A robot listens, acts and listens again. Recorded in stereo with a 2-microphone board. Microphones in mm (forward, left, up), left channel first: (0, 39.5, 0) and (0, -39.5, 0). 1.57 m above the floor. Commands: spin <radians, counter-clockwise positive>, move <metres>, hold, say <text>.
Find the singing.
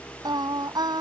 spin -1.13
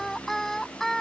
say Found it: singing, straight ahead.